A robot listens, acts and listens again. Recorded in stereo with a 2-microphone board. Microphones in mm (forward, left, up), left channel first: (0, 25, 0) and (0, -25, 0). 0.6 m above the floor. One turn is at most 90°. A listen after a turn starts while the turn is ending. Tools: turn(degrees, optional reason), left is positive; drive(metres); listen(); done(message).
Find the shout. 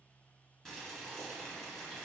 listen()
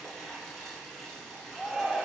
turn(degrees=30)
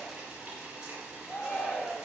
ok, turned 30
turn(degrees=90, reason="So it is at 150° left.")
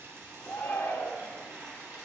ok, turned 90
turn(degrees=65, reason="The shout is now 65° left.")
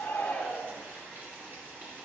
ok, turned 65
turn(degrees=25, reason="The shout is now 25° left.")
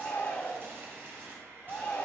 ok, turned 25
turn(degrees=35, reason="The shout is now 35° left.")
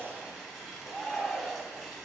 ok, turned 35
done("Facing the shout.")